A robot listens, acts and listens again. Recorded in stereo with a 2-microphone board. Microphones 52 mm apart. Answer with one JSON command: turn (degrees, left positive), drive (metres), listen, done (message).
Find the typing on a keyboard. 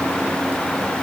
{"listen": true}
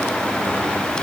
{"listen": true}
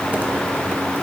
{"done": "I can't make out typing on a keyboard."}